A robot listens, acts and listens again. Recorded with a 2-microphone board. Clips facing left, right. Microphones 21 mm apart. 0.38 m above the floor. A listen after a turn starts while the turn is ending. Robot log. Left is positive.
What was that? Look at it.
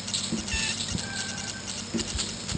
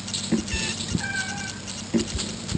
note: The cat meowing: about 25° right or 155° right.
cmd yaw -25
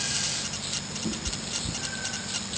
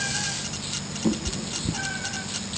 note: The cat meowing: about 40° right or 140° right.
cmd yaw -40
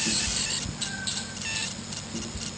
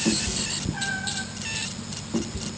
note: So it is at 110° right.
cmd yaw -110
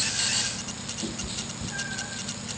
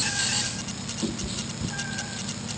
note: The cat meowing is now 15° right.
cmd yaw -15
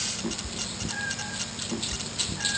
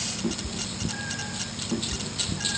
end: Found it: a cat meowing, straight ahead, over 4 m away.